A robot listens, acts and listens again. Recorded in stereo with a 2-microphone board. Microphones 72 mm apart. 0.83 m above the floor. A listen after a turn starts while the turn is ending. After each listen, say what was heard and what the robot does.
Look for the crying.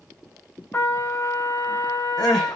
Turn 30° left.
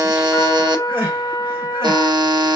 So it is at 30° right. Turn 30° right.
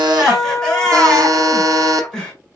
Found it: crying, straight ahead.